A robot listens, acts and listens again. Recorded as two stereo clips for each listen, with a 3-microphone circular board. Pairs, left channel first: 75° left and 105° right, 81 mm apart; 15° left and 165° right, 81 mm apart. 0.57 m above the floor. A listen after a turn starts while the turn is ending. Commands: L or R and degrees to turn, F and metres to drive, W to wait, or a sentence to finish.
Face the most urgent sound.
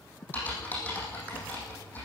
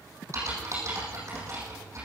W
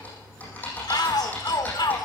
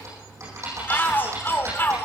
L75
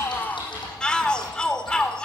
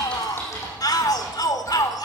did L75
Found it: a shout, straight ahead.